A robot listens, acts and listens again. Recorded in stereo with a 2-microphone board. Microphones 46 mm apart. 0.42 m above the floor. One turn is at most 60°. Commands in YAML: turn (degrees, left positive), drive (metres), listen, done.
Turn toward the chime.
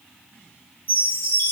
turn: 45
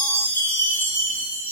turn: 60
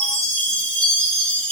turn: 30
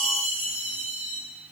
done: "Facing the chime, over 4 m away."